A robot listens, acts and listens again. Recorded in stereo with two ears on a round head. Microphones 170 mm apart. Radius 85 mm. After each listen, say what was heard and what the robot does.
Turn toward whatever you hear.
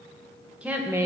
The woman speaking: about 15° right or 165° right. Turn 15° right.
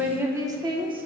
The woman speaking: about 25° right or 155° right. Turn 25° right.
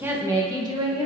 The woman speaking: about 25° right or 155° right. Turn 25° right.
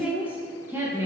The woman speaking: about 15° right or 165° right. Turn 15° right.
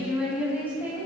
Turn 30° right.
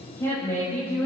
So it is at 10° left. Turn 10° left.
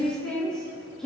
Found it: a woman speaking, straight ahead, 2 to 4 m away.